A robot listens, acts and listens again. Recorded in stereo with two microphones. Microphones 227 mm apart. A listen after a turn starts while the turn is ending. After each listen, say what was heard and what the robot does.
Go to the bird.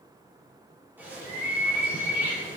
Turn 30° right.
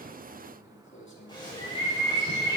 So it is at 20° left. Turn 20° left.
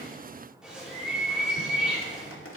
Drive 1.0 m forward.
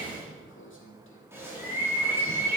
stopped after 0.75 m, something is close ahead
The bird is now 10° right. Turn 10° right.
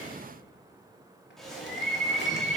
Something is in my way. I am facing the bird but have not reached it.